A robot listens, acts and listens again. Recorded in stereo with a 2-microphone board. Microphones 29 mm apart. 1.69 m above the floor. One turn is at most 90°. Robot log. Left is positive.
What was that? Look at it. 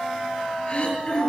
note: The throat clearing: about 30° left or 150° left.
cmd yaw +30
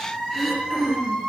end: Found it: throat clearing, straight ahead.